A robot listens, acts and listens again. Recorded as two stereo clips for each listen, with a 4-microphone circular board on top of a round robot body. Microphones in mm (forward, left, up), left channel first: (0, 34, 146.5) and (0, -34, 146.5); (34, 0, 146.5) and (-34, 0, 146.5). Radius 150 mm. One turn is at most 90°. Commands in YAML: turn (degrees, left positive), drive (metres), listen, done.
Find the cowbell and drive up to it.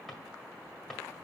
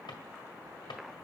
listen: true
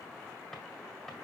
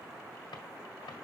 listen: true
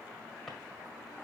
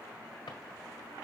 done: "I can't make out a cowbell, only a drawer."